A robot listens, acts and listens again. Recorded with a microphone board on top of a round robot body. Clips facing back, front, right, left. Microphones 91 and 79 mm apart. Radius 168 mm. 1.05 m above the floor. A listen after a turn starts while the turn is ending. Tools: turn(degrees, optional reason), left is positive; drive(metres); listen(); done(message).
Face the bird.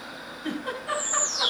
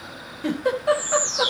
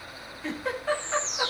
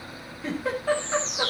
turn(degrees=70, reason="The bird: 70° left.")
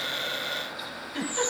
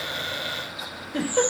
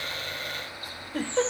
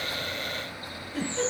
turn(degrees=20, reason="The bird is now 20° left.")
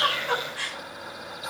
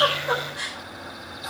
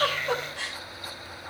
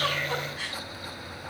listen()
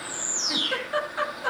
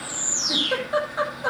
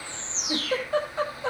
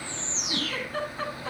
done("Found it: a bird, straight ahead.")